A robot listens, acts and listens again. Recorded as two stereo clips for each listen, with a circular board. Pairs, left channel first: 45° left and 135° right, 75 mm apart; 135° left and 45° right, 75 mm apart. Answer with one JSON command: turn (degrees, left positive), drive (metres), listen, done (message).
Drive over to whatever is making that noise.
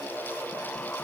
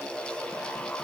{"listen": true}
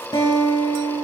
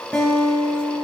{"turn": 60}
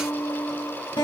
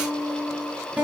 {"turn": 30}
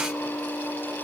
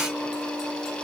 {"turn": -35}
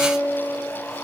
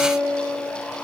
{"turn": 10}
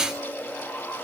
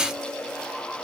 {"listen": true}
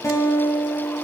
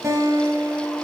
{"drive": 1.0}
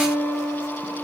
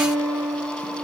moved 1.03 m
{"drive": 1.0}
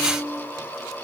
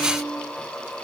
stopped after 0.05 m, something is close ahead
{"done": "Blocked. The guitar is further on, straight ahead."}